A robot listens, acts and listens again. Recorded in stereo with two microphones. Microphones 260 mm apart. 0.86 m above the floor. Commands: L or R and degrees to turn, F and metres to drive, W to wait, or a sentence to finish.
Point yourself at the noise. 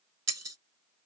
R90
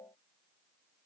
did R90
I heard breaking glass from this way, but can't make it out now.